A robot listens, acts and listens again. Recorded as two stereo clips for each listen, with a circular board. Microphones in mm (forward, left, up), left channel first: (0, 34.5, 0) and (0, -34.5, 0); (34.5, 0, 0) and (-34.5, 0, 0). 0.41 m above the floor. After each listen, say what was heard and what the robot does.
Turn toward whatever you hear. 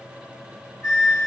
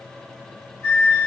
The flute: 50° left. Turn 50° left.
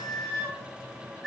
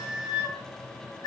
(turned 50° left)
Facing the flute.